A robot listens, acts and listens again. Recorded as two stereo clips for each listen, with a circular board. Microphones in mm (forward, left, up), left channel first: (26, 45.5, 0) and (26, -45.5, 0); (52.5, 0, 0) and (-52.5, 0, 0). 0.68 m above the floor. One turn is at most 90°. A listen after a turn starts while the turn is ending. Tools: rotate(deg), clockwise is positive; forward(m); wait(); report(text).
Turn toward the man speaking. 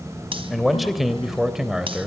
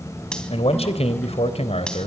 report("Facing the man speaking, 2 to 4 m away.")